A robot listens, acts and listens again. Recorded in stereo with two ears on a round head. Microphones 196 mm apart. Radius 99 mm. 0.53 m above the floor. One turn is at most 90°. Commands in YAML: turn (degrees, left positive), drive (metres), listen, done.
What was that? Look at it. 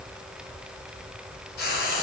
turn: 45
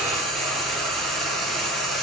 done: "Found it: frying, straight ahead, 1 to 2 m away."